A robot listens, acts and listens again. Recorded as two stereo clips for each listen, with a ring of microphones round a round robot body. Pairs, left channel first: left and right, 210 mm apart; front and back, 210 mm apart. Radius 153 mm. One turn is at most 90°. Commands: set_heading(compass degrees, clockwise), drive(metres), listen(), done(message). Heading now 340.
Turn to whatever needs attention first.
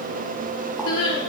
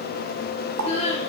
set_heading(265)
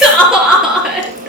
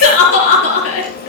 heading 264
done("Found it: crying, straight ahead.")